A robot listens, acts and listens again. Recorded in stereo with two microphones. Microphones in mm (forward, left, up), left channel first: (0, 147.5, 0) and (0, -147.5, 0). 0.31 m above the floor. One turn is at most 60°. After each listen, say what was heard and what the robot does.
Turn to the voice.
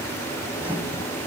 Keep listening.
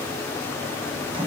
Keep listening.
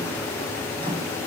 I can't make out anyone speaking, only a microwave.